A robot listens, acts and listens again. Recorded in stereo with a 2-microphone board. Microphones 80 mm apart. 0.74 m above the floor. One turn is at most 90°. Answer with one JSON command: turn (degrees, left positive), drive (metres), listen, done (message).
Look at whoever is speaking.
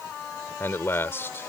{"turn": 30}
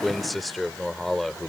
{"done": "Found it: a man speaking, straight ahead."}